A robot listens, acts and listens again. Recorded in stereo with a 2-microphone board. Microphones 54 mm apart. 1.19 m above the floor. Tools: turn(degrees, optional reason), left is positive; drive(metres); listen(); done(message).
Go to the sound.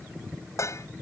turn(degrees=65, reason="The dishes clattering: about 65° left or 115° left.")
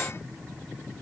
listen()
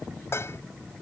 turn(degrees=50, reason="So it is at 50° left.")
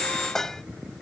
turn(degrees=10, reason="The dishes clattering is now 10° left.")
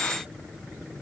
listen()
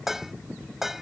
drive(metres=1.0)
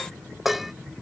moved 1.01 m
drive(metres=1.0)
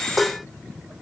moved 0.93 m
drive(metres=1.0)
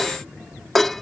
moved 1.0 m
drive(metres=1.0)
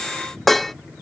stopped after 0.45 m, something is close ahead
done("I am next to the dishes clattering.")